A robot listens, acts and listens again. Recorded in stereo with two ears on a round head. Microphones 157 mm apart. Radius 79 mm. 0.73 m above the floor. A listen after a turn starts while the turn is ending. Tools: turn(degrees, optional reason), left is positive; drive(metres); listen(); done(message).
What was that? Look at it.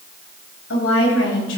turn(degrees=90)
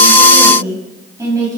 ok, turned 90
turn(degrees=-20, reason="So it is at 20° right.")
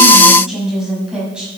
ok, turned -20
done("Found it: a woman speaking, straight ahead, over 4 m away.")